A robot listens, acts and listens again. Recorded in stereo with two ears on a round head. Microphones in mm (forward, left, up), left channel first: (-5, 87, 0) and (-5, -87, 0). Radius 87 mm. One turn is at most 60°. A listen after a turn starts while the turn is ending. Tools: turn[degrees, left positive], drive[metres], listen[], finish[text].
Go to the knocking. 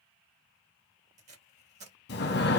Action: listen[]
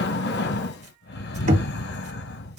Thought: The knocking: about 40° right or 140° right.
Action: turn[-40]
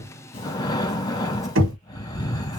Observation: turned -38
Thought: So it is at 100° right.
Action: turn[-60]
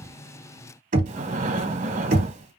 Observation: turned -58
Thought: The knocking is now 45° right.
Action: turn[-45]
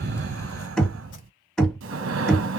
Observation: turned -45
Action: drive[1.0]
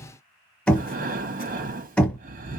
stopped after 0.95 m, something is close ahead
Action: finish[I am next to the knocking.]